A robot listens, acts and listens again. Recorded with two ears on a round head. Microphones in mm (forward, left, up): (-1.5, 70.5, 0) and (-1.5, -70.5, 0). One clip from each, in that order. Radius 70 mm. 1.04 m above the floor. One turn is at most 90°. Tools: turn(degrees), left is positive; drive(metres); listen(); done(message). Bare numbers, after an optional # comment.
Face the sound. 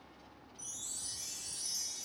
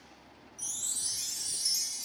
# The chime: about 45° right or 135° right.
turn(-45)
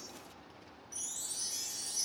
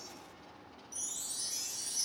done("Found it: a chime, straight ahead.")